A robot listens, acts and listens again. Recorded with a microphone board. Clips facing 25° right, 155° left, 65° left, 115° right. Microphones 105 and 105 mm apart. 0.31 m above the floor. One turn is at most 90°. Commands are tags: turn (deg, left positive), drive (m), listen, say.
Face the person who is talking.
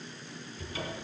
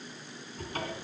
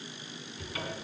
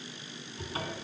<listen/>
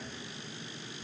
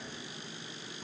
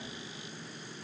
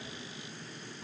<listen/>
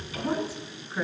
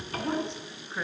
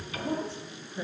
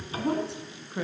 <turn deg="-90"/>
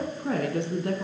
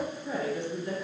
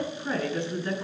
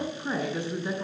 <turn deg="-35"/>
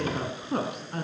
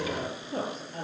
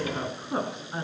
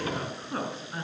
<say>Facing the woman speaking.</say>